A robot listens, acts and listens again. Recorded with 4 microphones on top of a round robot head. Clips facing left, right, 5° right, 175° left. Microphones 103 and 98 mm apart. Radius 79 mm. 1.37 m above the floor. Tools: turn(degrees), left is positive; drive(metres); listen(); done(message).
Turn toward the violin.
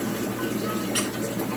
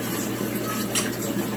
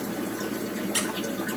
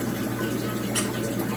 listen()
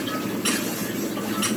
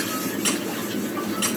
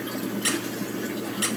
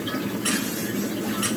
listen()
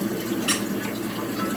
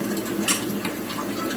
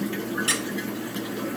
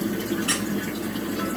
done("I can't make out a violin to turn to.")